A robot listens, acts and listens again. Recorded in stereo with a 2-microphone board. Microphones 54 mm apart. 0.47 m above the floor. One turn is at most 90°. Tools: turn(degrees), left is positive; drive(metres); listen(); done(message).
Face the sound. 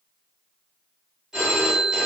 turn(degrees=-30)
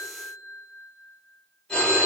turn(degrees=20)
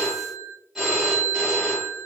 done("Found it: a phone ringing, straight ahead.")